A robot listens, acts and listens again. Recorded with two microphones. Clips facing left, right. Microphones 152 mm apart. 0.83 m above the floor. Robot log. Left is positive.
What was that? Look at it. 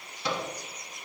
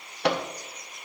note: The microwave: about 70° right or 110° right.
cmd yaw -70
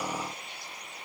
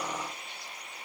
cmd idle
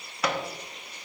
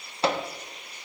note: So it is at 30° right.
cmd yaw -30
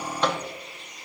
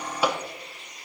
note: The microwave is now 10° right.
cmd yaw -10
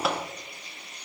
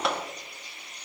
end: Facing the microwave, under 1 m away.